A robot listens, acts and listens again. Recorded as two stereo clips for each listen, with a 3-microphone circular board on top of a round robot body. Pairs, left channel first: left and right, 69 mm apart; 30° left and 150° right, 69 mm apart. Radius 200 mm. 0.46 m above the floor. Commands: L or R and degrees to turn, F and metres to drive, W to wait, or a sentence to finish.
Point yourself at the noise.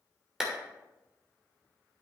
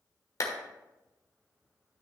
R10
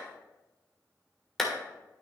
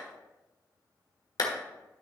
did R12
Facing the clap, 1 to 2 m away.